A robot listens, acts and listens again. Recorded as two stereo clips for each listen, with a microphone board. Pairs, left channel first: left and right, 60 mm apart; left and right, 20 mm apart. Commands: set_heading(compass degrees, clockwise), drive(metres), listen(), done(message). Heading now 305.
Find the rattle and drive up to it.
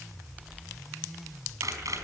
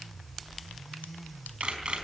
listen()
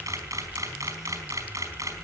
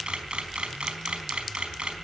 listen()
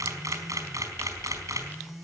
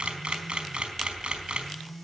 done("I can't make out a rattle, only a camera shutter.")